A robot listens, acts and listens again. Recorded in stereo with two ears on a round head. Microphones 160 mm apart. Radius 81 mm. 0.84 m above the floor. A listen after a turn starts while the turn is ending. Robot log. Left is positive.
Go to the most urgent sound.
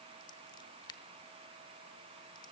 cmd idle
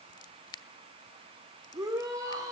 note: The shout: about 20° right or 160° right.
cmd yaw -20
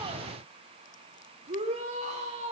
note: So it is at 140° right.
cmd yaw -140
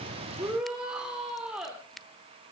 cmd fwd 1.0
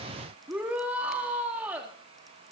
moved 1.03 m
note: The shout is now 10° right.
cmd yaw -10
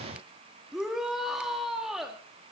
cmd fwd 1.0
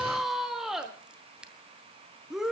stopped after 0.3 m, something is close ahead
end: Arrived at the shout, straight ahead.